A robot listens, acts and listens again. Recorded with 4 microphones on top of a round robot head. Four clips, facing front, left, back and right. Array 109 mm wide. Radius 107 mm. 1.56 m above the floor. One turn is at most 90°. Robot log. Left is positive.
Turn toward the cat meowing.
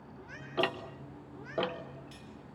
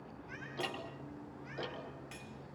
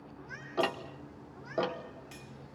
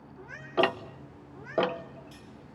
note: The cat meowing: 60° right.
cmd yaw -60
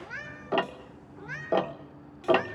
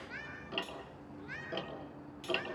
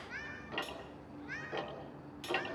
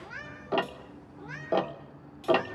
note: The cat meowing is now 10° left.
cmd yaw +10
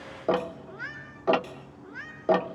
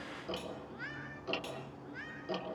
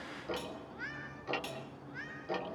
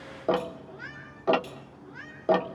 note: The cat meowing is now 10° left.
cmd yaw +10
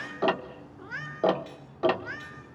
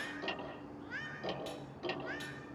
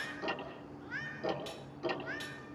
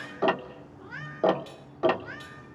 end: Facing the cat meowing, 2 to 4 m away.